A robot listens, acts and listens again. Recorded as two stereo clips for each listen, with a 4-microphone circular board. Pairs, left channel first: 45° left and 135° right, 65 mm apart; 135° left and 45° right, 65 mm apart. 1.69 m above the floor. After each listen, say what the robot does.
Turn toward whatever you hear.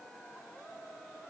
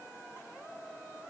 Keep listening.
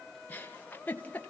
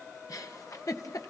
Turn 105° left.
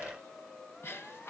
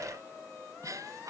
Turn 10° right.
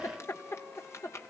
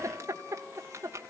Found it: a giggle, straight ahead.